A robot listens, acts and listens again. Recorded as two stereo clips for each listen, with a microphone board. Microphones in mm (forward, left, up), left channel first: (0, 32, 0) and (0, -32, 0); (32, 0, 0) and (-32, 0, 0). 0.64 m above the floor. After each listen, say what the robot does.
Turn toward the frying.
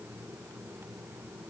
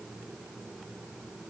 Keep listening.
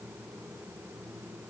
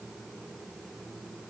Keep listening.
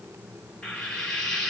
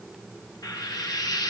Turn 10° left.
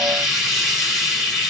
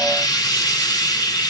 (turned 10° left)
Found it: frying, straight ahead, 1 to 2 m away.